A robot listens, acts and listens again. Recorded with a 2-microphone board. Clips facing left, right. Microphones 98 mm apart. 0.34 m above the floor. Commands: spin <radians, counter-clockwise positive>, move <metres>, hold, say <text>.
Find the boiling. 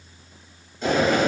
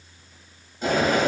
spin -0.52
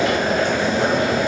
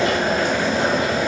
spin -2.44
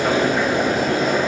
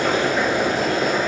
spin 0.61
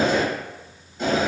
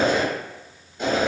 say Found it: boiling, straight ahead, 1 to 2 m away.